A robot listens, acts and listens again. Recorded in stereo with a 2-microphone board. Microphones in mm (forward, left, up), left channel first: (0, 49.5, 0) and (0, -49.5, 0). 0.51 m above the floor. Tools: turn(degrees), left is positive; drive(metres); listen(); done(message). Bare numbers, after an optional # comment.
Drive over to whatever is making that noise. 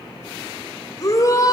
# The shout: about 35° left or 145° left.
turn(35)
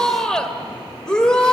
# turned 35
# So it is at 10° left.
turn(10)
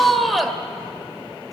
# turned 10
drive(1.0)
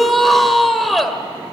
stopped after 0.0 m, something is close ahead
done("Blocked. The shout is further on, straight ahead.")